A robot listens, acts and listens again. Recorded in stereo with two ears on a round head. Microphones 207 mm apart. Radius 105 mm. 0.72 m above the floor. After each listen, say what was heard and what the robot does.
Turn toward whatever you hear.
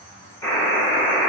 Turn 30° left.
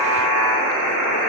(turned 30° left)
So it is at 15° right. Turn 15° right.
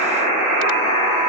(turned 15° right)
Found it: a buzzer, straight ahead, 1 to 2 m away.